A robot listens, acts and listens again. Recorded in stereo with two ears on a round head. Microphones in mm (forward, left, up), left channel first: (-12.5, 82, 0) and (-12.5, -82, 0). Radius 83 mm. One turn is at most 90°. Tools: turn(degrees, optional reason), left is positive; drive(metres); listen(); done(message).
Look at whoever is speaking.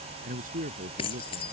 turn(degrees=-50, reason="The man speaking: about 50° right or 130° right.")
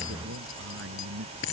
turn(degrees=-85, reason="So it is at 85° right.")
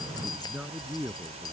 done("Facing the man speaking.")